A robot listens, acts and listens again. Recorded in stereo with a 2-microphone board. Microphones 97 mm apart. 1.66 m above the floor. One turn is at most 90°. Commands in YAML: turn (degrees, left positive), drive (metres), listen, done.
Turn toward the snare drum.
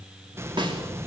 turn: -55
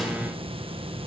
listen: true
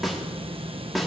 done: "Found it: a snare drum, straight ahead, 2 to 4 m away."